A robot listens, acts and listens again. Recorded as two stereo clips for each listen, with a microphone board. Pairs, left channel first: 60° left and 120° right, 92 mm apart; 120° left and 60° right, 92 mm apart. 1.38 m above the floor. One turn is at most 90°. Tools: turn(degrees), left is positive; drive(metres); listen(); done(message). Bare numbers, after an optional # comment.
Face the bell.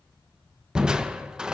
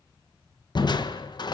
listen()
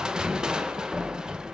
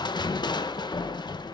listen()
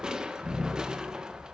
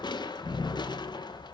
done("I can't make out a bell to turn to.")